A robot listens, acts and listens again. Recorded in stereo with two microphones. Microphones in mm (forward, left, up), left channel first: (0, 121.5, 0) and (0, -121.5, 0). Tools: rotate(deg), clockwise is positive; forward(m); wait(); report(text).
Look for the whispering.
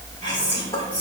rotate(-20)
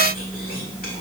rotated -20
rotate(-140)
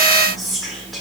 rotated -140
report("Facing the whispering, 1 to 2 m away.")